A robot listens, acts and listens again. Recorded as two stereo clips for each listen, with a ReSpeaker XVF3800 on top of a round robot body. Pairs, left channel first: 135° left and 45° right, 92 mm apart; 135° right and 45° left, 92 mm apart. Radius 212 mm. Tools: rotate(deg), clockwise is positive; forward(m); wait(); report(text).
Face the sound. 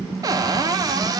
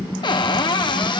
rotate(95)
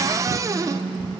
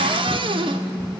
rotate(-15)
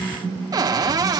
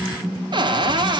report("Found it: a cupboard door, straight ahead.")